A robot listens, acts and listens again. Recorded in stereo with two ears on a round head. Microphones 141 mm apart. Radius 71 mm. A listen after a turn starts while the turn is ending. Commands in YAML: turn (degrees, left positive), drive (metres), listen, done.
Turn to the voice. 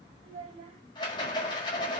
turn: -45
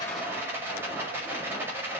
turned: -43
listen: true
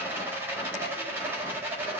listen: true
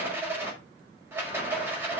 done: "I heard a child speaking, but can't make it out now. It was about straight ahead or 90° right."